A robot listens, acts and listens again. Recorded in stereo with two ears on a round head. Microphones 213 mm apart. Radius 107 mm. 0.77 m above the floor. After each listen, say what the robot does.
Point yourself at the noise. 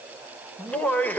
Turn 30° left.
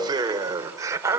Turn 10° right.
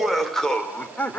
Turn 10° left.
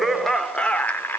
Turn 10° left.
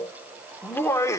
Turn 15° left.
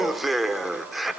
Facing the laughter.